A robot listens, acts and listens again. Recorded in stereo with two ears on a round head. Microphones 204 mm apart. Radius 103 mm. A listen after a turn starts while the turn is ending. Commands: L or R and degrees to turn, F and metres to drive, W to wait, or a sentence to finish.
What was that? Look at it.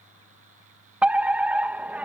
R30
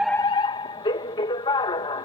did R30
L25
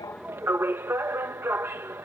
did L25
R10
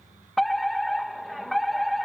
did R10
Found it: a fire alarm, straight ahead.